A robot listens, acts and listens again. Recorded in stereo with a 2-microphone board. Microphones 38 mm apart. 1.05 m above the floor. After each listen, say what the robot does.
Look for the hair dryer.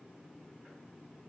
Keep listening.
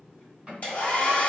Turn 45° left.
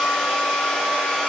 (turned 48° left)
Found it: a hair dryer, straight ahead, 1 to 2 m away.